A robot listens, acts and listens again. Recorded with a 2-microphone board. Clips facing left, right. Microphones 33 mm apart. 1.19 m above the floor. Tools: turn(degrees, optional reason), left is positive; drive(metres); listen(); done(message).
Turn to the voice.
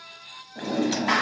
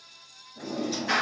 listen()
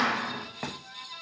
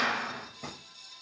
listen()
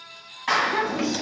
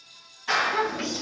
turn(degrees=30)
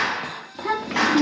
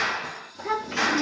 turn(degrees=135, reason="So it is at 135° left.")
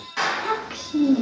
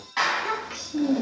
turn(degrees=20, reason="The child speaking is now 20° left.")
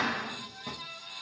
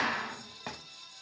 listen()
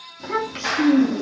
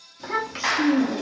done("Found it: a child speaking, straight ahead, 1 to 2 m away.")